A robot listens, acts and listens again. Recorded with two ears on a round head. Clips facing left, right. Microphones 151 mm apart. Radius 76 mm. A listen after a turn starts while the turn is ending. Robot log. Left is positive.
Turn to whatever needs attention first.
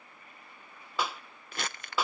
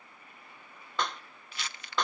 cmd idle
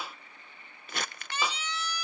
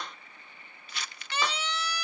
note: The siren: about 55° right or 125° right.
cmd yaw -55
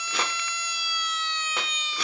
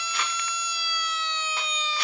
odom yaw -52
note: So it is at 70° right.
cmd yaw -70
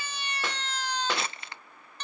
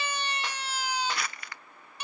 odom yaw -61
note: The siren is now 10° right.
cmd yaw -10
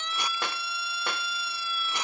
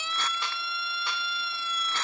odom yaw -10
end: Facing the siren.